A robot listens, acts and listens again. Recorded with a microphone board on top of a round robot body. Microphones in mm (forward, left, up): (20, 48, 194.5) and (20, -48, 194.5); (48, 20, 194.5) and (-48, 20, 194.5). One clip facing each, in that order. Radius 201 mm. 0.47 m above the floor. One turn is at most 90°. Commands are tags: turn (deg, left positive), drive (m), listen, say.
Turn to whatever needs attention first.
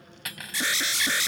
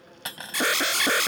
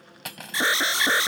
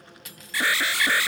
<turn deg="-65"/>
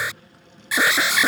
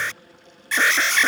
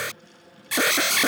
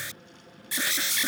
<turn deg="10"/>
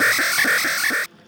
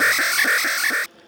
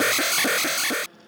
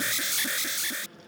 <say>Facing the alarm.</say>